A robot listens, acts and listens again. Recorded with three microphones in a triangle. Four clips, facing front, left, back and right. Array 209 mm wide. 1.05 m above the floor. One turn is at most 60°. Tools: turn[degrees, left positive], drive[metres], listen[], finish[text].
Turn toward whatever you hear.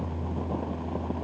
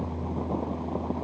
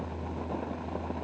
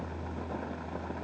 Action: listen[]
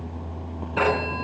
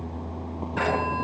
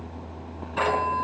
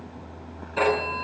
Action: finish[Facing the phone ringing, over 4 m away.]